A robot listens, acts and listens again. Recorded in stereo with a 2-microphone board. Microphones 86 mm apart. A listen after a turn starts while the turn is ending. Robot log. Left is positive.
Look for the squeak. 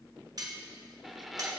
cmd yaw +30
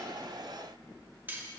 cmd idle
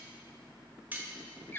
note: So it is at 155° left.
cmd yaw +155
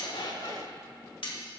note: The squeak is now 40° left.
cmd yaw +40
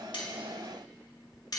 cmd idle
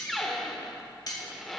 end: Found it: a squeak, straight ahead, 1 to 2 m away.